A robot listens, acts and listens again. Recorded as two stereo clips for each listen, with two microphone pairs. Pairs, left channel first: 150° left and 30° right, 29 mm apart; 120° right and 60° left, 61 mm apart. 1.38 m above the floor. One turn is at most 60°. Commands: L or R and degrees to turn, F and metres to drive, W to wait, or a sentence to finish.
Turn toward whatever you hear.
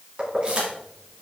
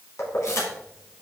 R60
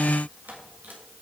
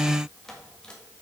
R25
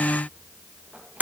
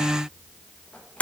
R60
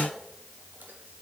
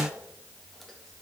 W
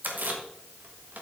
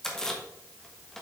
R45
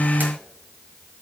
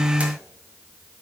W
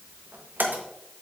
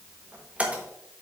R15
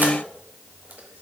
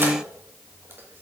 W
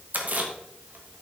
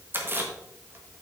Found it: keys jangling, straight ahead, 1 to 2 m away.